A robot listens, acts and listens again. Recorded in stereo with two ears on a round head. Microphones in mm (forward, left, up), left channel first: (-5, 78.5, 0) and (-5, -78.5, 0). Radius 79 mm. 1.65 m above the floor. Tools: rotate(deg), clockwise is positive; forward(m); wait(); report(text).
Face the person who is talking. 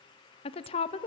rotate(-35)
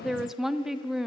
report("Facing the woman speaking.")